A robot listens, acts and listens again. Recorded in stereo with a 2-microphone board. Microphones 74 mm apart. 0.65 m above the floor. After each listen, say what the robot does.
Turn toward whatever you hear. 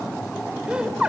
Turn 30° right.
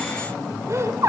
Turn 135° right.
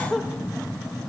Facing the laughter.